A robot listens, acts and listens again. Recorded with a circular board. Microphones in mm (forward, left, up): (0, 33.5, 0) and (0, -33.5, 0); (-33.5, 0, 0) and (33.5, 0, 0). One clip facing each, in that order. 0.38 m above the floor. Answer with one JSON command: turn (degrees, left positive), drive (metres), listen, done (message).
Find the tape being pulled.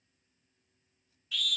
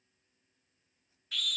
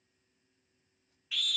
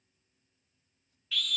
{"listen": true}
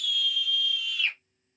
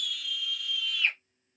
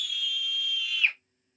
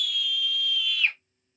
{"listen": true}
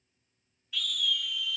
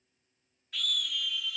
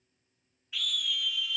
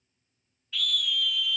{"done": "I can't make out tape being pulled to turn to."}